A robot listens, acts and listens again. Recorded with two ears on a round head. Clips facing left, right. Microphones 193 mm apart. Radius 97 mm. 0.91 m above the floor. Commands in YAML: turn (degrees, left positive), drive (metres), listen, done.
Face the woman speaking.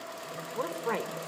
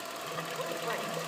turn: 60
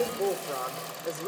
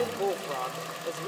turn: 20
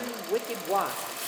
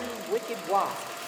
turn: 10
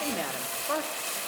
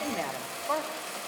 turn: 15
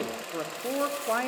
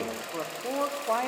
turn: 15
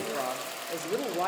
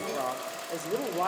done: "Found it: a woman speaking, straight ahead."